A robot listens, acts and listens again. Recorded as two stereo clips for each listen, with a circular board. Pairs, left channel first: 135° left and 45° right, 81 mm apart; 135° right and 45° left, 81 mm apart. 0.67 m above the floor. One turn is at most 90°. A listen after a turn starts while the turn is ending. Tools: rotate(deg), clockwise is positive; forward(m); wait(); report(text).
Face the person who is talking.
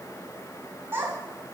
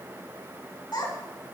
rotate(90)
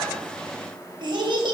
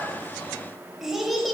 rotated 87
rotate(45)
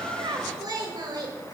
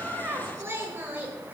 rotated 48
rotate(20)
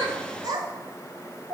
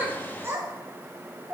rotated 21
rotate(25)
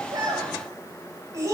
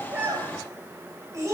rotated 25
report("Found it: a child speaking, straight ahead, 2 to 4 m away.")